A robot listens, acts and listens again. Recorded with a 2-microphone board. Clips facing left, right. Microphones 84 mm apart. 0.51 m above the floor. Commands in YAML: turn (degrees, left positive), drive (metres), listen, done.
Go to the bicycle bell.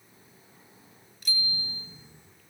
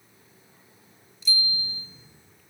turn: 65
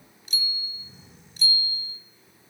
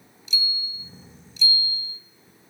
turn: 50
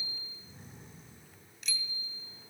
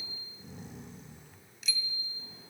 drive: 1.0
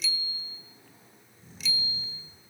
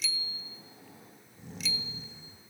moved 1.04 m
drive: 1.0
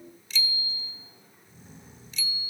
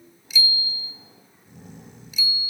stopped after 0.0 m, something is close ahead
turn: -10
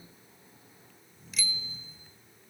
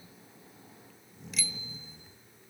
done: "I am next to the bicycle bell."